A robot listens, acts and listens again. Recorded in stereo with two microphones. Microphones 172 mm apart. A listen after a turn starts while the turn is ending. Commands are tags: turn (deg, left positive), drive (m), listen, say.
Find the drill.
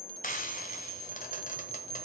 <listen/>
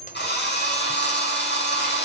<turn deg="90"/>
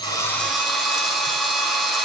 <say>Found it: a drill, straight ahead, over 4 m away.</say>